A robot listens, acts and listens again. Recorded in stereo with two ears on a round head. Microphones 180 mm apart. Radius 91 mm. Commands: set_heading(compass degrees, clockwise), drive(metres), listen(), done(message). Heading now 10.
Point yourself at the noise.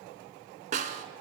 set_heading(50)
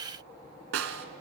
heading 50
set_heading(145)
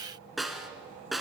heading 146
done("Facing the snare drum.")